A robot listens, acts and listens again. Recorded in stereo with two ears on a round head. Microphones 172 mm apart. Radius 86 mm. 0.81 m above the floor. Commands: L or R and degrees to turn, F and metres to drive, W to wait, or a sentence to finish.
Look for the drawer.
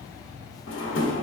L65
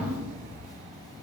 W
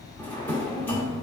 L10
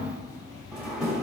Facing the drawer.